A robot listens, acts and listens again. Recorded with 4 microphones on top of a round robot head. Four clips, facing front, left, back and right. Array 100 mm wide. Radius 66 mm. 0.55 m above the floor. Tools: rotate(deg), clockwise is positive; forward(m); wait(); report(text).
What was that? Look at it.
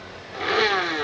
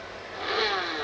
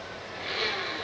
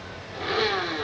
report("Found it: a blender, straight ahead, 1 to 2 m away.")